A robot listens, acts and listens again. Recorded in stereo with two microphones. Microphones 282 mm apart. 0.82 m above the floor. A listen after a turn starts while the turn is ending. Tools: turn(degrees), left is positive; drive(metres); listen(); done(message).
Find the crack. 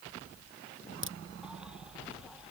turn(degrees=-45)
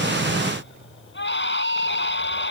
listen()
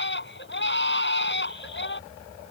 done("I heard a crack, but can't make it out now. It was about straight ahead or 90° right.")